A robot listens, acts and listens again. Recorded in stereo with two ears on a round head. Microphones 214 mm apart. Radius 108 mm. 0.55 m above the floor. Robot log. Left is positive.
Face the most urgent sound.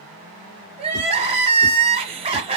note: The crying: about 25° right or 155° right.
cmd yaw -25
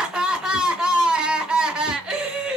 end: Found it: crying, straight ahead, 1 to 2 m away.